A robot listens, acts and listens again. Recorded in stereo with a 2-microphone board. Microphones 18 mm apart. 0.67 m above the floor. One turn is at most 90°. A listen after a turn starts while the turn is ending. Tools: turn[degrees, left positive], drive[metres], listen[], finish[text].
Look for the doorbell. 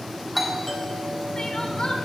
Action: turn[30]
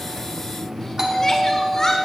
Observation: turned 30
Thought: So it is at 20° right.
Action: turn[-20]
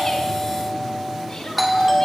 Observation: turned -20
Action: finish[Found it: a doorbell, straight ahead, 2 to 4 m away.]